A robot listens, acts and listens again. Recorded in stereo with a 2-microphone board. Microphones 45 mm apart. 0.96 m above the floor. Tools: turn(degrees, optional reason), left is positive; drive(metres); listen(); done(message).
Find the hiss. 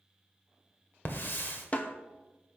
turn(degrees=50, reason="The hiss: about 50° left or 130° left.")
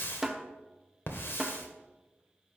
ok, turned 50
turn(degrees=70, reason="So it is at 70° left.")
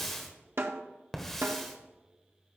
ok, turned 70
turn(degrees=10, reason="The hiss is now 10° left.")
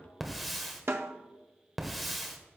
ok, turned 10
done("Facing the hiss, 1 to 2 m away.")